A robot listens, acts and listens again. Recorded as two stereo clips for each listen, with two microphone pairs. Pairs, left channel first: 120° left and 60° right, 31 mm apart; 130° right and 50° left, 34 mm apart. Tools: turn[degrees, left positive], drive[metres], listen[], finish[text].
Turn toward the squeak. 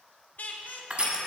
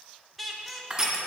Thought: The squeak: 140° left.
Action: turn[140]
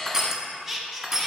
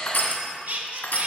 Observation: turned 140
Thought: The squeak is now 25° left.
Action: turn[25]
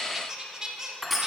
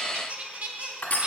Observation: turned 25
Thought: The squeak is now 10° left.
Action: turn[10]
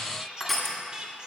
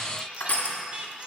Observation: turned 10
Action: finish[Facing the squeak.]